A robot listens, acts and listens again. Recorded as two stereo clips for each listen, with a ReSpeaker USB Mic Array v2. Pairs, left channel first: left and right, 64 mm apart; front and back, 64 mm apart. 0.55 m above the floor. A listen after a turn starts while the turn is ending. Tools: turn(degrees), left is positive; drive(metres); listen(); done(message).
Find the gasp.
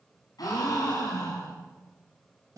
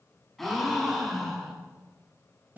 turn(degrees=85)
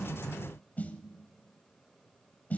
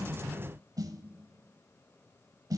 done("Facing where the gasp came from. I can't hear it now.")